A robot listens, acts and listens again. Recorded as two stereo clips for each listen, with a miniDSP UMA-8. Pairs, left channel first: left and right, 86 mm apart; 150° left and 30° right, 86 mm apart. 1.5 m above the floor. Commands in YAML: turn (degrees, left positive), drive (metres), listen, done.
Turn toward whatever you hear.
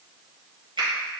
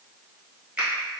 turn: -105
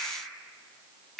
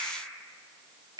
done: "Found it: a finger snap, straight ahead, 1 to 2 m away."